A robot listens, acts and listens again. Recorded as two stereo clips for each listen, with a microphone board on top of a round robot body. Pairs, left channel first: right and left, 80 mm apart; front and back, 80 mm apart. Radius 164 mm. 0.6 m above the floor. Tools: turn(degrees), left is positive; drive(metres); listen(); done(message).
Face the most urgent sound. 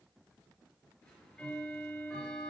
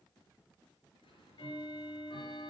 listen()
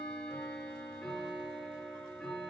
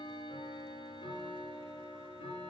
listen()
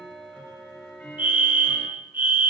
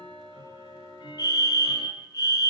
turn(degrees=25)
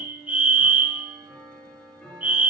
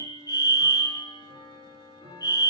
turn(degrees=25)
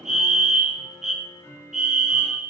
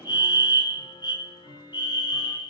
done("Found it: a fire alarm, straight ahead.")